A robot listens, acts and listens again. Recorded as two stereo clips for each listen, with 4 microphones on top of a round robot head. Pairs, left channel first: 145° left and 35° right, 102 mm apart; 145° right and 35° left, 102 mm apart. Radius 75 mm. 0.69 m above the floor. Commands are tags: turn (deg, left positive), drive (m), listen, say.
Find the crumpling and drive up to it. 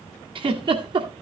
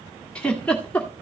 <listen/>
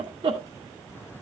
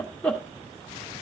<listen/>
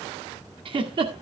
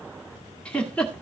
<say>I can't make out crumpling to turn to.</say>